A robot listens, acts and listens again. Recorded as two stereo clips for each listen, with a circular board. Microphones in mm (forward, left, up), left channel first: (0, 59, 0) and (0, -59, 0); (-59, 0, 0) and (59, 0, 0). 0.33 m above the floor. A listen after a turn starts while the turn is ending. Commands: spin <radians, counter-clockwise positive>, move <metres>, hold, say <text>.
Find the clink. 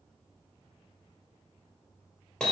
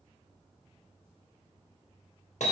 hold
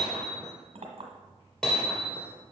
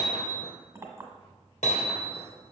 spin -1.13
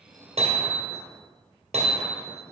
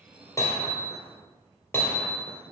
hold
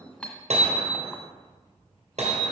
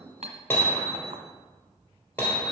spin 0.17
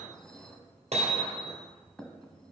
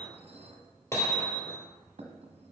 say Found it: a clink, straight ahead.